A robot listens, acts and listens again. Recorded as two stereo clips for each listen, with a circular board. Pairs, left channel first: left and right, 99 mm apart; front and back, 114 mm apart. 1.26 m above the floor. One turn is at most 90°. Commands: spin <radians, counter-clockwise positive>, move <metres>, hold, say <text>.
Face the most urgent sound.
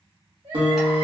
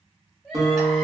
spin -1.48
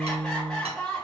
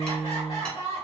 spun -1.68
spin 0.17
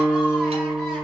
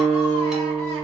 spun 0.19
hold
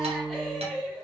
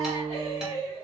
say Facing the crying.